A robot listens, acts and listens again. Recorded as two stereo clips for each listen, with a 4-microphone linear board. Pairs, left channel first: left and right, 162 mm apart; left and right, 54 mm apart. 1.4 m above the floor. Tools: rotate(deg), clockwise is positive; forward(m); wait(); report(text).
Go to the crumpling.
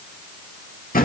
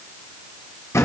wait()
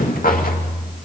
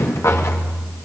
wait()
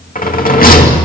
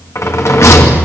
report("I can't make out crumpling, only a rattle.")